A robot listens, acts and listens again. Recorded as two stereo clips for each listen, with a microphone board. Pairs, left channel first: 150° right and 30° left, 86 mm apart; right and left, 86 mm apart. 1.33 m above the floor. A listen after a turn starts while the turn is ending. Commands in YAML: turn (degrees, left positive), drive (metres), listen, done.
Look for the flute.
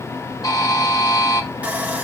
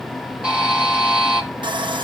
listen: true
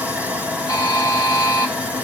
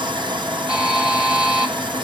listen: true
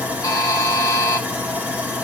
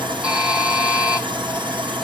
done: "I can't make out a flute to turn to."